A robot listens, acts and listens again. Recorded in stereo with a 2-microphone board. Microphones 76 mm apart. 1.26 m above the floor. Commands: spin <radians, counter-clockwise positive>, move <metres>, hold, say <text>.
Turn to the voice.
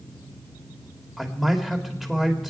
spin -0.52
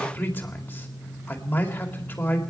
spin 0.44
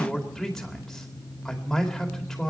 say Found it: a man speaking, straight ahead.